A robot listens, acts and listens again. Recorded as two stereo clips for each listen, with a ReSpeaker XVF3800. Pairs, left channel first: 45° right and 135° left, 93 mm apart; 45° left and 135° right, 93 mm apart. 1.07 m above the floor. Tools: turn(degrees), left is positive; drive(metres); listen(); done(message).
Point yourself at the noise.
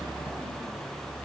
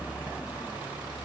listen()
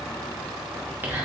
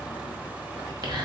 turn(degrees=-160)
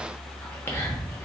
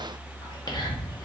turn(degrees=15)
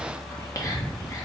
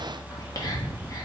done("Facing the whispering.")